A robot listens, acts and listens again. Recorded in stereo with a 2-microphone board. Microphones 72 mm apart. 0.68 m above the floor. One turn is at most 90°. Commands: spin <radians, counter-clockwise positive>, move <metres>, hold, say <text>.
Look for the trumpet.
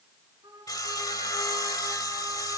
spin -1.57
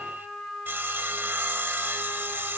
say Found it: a trumpet, straight ahead, over 4 m away.